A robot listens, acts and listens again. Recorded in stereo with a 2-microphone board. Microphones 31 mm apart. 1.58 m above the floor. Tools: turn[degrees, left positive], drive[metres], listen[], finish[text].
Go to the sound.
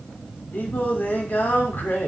Thought: The singing: about 75° left or 105° left.
Action: turn[75]
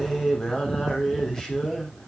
Thought: So it is at 25° left.
Action: turn[25]
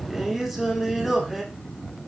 Action: drive[1.0]
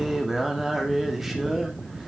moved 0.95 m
Action: drive[1.0]
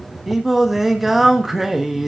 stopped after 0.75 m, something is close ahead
Action: finish[Arrived at the singing, straight ahead.]